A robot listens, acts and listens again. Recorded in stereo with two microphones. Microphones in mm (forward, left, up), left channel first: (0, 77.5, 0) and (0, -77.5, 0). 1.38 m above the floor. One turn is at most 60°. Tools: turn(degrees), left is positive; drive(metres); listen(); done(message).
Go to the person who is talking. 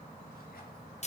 listen()
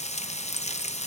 listen()
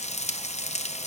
done("I can't make out anyone speaking, only frying.")